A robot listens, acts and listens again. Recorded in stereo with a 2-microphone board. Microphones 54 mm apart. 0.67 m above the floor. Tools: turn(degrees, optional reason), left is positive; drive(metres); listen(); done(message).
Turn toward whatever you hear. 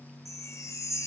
turn(degrees=70, reason="The chime: about 70° left or 110° left.")
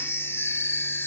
turn(degrees=45, reason="So it is at 45° left.")
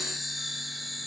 done("Found it: a chime, straight ahead, 1 to 2 m away.")